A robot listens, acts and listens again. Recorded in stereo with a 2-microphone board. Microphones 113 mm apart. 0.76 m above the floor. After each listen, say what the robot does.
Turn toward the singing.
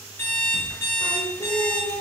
Turn 50° left.
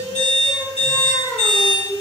Turn 20° left.
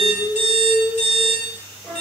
Turn 25° left.
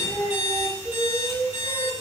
Facing the singing.